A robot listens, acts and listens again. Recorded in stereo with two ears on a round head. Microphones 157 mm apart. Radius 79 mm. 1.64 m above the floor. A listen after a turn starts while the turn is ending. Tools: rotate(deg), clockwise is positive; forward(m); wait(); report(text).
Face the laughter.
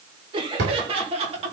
rotate(35)
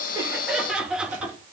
rotate(10)
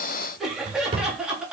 report("Facing the laughter.")